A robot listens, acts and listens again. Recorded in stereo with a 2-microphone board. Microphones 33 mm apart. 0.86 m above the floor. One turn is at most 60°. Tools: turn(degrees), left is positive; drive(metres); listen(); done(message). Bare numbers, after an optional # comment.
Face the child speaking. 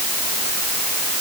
listen()
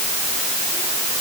listen()
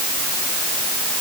done("I can't make out a child speaking.")